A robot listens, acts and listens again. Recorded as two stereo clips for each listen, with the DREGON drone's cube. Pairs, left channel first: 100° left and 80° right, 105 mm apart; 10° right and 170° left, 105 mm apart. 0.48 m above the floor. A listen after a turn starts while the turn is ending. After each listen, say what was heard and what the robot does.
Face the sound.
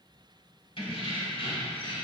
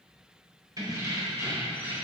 The keys jangling: 100° left. Turn 100° left.
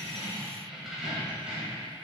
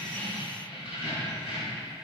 Found it: keys jangling, straight ahead, 2 to 4 m away.